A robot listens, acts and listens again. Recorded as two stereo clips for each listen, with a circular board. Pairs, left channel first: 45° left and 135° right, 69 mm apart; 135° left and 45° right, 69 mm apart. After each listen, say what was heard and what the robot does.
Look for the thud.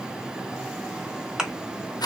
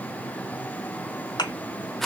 The thud: 145° left. Turn 145° left.
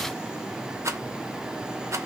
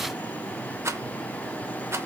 I heard a thud from this way, but can't make it out now.